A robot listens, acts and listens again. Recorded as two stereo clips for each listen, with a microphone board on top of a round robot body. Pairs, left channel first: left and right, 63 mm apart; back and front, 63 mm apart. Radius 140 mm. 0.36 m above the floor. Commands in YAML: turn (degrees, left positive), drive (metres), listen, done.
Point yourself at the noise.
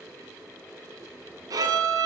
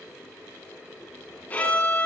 turn: -115
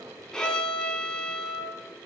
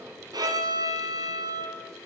turn: 10
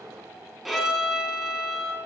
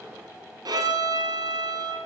done: "Found it: a violin, straight ahead."